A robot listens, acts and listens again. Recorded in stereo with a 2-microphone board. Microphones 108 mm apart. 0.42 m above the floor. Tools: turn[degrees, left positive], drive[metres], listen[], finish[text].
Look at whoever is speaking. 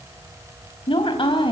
Thought: The woman speaking: about 50° left or 130° left.
Action: turn[50]
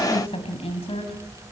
Thought: So it is at 70° left.
Action: turn[70]
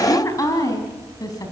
Thought: The woman speaking is now 35° left.
Action: turn[35]
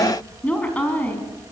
Thought: The woman speaking is now 15° left.
Action: turn[15]
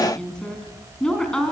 Action: finish[Facing the woman speaking.]